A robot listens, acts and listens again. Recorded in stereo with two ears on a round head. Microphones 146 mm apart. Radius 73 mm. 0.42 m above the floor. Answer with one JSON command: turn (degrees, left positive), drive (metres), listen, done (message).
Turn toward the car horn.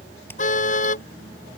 {"turn": 45}
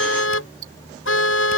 {"turn": 85}
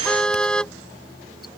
{"done": "Found it: a car horn, straight ahead."}